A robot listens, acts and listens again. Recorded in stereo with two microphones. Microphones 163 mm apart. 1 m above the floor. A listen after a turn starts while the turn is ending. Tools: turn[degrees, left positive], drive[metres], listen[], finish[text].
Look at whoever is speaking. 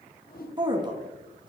Thought: The woman speaking: about 25° right or 155° right.
Action: turn[-25]
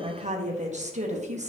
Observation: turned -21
Thought: So it is at 130° right.
Action: turn[-130]
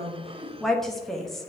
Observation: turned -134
Action: finish[Found it: a woman speaking, straight ahead, 1 to 2 m away.]